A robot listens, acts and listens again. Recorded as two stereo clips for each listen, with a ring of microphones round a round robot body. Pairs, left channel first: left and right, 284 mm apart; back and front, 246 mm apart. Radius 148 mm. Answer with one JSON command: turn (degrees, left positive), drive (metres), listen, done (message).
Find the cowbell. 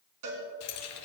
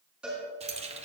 {"turn": -85}
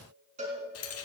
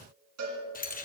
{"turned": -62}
{"turn": -25}
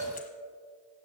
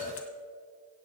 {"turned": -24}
{"done": "Facing the cowbell."}